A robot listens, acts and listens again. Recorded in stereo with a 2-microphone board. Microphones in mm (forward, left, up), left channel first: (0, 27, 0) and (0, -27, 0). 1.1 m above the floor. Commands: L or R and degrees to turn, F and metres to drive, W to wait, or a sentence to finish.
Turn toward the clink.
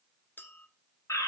L35
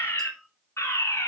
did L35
Found it: a clink, straight ahead, 1 to 2 m away.